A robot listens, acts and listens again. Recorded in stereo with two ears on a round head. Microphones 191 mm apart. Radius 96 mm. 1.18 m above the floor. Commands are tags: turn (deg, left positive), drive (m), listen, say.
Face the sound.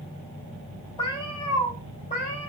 <turn deg="35"/>
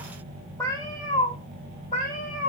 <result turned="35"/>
<turn deg="40"/>
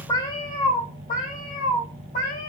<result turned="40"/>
<turn deg="45"/>
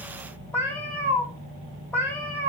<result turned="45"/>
<turn deg="10"/>
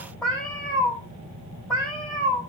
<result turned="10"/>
<say>Facing the cat meowing.</say>